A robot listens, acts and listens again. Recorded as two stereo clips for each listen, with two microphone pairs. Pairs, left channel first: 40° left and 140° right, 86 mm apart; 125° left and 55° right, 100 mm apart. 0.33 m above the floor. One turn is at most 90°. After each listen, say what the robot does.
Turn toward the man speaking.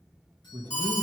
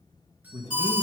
Turn 90° right.
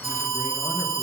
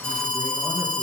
Turn 20° right.
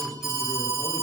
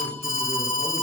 Keep listening.
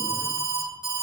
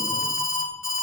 Facing where the man speaking came from. I can't hear it now.